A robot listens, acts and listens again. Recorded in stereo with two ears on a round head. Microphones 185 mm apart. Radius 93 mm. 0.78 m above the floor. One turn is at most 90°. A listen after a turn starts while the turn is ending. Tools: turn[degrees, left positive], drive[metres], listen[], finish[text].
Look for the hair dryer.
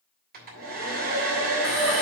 Thought: The hair dryer: about 50° right or 130° right.
Action: turn[-50]
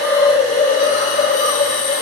Action: listen[]
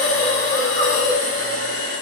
Action: listen[]
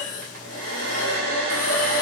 Thought: So it is at 80° right.
Action: turn[-80]
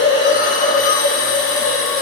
Action: listen[]
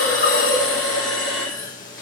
Action: listen[]
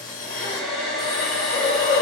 Action: finish[Facing the hair dryer.]